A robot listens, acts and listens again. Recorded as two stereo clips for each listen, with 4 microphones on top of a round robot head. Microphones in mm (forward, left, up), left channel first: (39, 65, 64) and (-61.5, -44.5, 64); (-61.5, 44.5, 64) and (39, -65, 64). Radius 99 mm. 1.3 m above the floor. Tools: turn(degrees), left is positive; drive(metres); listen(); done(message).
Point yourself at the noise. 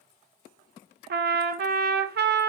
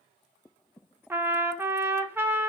turn(degrees=-125)
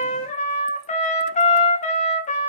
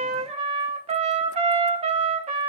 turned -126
done("Facing the trumpet, 1 to 2 m away.")